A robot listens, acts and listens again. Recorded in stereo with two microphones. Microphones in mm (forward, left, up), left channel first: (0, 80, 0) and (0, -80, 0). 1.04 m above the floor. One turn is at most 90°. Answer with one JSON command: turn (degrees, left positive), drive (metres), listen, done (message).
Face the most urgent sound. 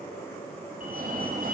{"turn": -60}
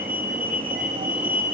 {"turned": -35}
{"turn": -70}
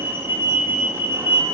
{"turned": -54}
{"turn": -15}
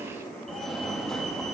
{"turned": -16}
{"done": "Found it: a fire alarm, straight ahead, 2 to 4 m away."}